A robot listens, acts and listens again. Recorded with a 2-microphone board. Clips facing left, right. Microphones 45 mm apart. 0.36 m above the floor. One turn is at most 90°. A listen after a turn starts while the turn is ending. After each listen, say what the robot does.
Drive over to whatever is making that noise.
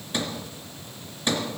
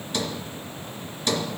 Turn 30° left.
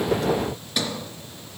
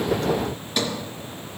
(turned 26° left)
Drive 1.0 m forward.
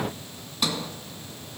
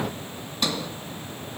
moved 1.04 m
Drive 1.0 m forward.
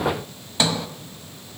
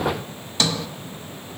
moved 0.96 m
Turn 25° left.
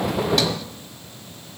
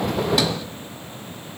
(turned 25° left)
Keep listening.
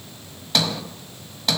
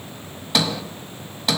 Drive 1.0 m forward.
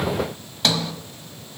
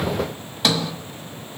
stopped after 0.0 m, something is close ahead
Arrived at the sliding door, straight ahead.